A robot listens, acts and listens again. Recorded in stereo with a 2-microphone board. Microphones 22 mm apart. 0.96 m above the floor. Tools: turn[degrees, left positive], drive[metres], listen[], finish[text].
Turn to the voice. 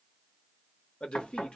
Thought: The man speaking: about 55° left or 125° left.
Action: turn[55]
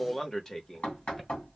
Thought: So it is at 25° left.
Action: turn[25]
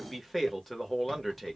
Action: finish[Found it: a man speaking, straight ahead.]